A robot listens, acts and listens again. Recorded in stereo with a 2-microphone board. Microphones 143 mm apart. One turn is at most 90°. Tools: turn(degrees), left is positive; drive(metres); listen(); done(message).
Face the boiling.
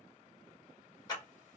listen()
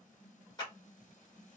listen()
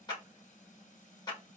done("I can't make out boiling to turn to.")